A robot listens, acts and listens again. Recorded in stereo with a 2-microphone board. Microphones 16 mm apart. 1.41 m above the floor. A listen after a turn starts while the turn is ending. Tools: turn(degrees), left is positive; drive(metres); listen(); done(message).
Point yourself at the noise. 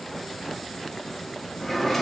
turn(degrees=30)
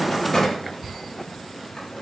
turn(degrees=140)
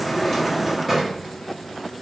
done("Facing the drawer.")